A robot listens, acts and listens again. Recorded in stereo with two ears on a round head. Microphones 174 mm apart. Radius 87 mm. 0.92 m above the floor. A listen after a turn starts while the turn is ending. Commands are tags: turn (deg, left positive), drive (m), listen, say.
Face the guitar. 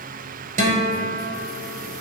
<turn deg="-40"/>
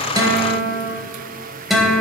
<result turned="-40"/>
<say>Facing the guitar.</say>